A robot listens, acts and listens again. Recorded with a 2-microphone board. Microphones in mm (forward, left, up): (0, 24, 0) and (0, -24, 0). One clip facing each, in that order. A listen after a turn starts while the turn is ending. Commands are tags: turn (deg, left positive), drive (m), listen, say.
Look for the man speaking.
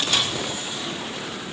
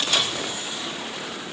<listen/>
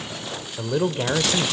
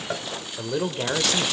<turn deg="30"/>
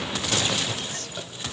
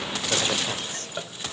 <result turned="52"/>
<turn deg="-45"/>
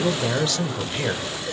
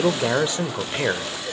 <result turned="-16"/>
<turn deg="-30"/>
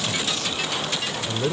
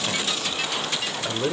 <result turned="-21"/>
<turn deg="-10"/>
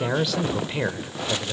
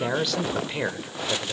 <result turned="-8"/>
<say>Found it: a man speaking, straight ahead.</say>